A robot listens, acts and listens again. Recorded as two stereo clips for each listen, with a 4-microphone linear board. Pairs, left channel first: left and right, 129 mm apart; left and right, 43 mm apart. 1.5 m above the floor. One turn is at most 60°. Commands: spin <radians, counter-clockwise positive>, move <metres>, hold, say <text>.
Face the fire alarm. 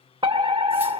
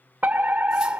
spin -0.70
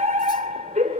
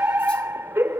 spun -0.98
spin -1.05
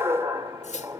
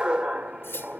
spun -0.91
spin -0.52
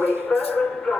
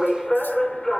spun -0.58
say Facing the fire alarm, 2 to 4 m away.